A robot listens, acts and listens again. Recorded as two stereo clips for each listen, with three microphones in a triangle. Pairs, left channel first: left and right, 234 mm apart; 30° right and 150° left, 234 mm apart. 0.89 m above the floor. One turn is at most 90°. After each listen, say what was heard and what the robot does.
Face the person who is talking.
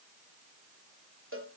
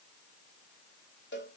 Keep listening.
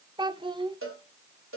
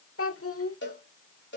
The child speaking: 20° right. Turn 20° right.
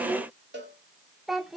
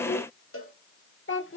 Found it: a child speaking, straight ahead, 1 to 2 m away.